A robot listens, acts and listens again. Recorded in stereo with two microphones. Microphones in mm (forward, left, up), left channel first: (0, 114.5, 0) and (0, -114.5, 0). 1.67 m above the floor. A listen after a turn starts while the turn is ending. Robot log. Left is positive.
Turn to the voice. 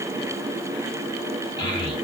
note: The child speaking: about 20° left or 160° left.
cmd yaw +20
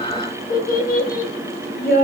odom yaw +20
note: So it is at 140° left.
cmd yaw +140
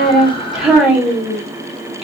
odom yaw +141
end: Found it: a child speaking, straight ahead.